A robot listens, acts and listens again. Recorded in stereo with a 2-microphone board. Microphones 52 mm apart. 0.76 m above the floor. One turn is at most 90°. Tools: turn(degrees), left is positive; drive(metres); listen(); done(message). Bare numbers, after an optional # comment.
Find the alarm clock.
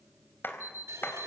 turn(90)
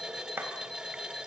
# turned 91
listen()
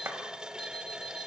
listen()
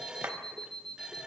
# The alarm clock is now 10° left.
turn(10)
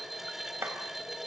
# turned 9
listen()
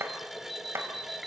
done("Found it: an alarm clock, straight ahead.")